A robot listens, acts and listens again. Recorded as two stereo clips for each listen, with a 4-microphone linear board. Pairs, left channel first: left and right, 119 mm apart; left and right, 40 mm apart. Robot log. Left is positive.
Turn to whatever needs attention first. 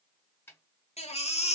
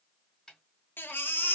note: The baby crying: about 65° left or 115° left.
cmd yaw +65
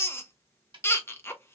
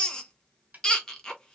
note: So it is at 20° left.
cmd yaw +20
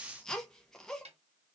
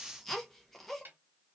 end: Facing the baby crying.